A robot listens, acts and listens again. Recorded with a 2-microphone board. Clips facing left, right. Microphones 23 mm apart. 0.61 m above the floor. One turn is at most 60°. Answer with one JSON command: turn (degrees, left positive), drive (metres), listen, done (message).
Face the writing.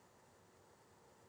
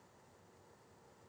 {"listen": true}
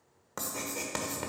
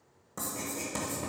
{"turn": 40}
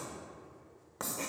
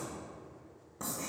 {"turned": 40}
{"turn": 60}
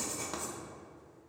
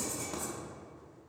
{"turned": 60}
{"turn": 25}
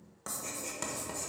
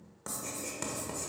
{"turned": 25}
{"done": "Facing the writing."}